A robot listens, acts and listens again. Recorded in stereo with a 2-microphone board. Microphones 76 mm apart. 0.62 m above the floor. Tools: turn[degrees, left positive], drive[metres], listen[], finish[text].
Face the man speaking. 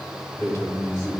Thought: The man speaking: about 45° left or 135° left.
Action: turn[45]
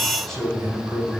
Thought: So it is at 10° left.
Action: turn[10]
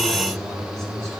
Action: finish[Found it: a man speaking, straight ahead, over 4 m away.]